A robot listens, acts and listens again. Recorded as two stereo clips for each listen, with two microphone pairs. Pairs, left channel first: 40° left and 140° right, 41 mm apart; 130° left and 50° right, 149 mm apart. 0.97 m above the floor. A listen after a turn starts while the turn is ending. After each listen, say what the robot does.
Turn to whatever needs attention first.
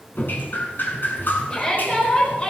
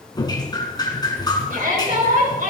Turn 30° right.
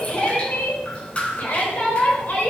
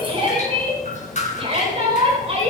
Facing the shout, over 4 m away.